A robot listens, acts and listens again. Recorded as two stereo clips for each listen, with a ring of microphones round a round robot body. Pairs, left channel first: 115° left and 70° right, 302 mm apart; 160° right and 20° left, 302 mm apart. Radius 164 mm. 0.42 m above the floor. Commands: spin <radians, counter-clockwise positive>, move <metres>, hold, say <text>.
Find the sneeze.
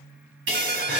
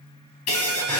spin -2.09
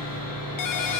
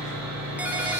say Facing where the sneeze came from. I can't hear it now.